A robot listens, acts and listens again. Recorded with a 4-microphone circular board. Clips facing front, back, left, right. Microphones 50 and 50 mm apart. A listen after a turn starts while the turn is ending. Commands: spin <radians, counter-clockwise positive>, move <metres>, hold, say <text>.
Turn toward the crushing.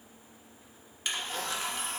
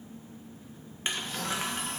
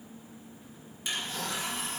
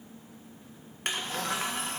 spin -2.09
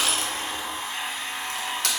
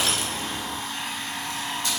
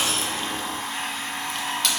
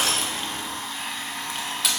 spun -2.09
say Found it: crushing, straight ahead, 1 to 2 m away.